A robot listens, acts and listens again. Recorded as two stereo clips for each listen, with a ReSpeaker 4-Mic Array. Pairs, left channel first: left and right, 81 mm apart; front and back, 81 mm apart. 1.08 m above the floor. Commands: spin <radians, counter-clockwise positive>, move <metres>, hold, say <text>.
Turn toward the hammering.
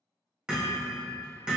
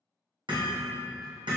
spin -2.97
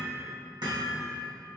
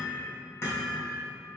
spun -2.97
spin -0.96
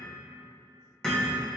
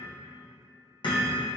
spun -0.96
spin 0.17
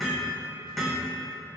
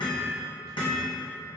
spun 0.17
say Facing the hammering, 1 to 2 m away.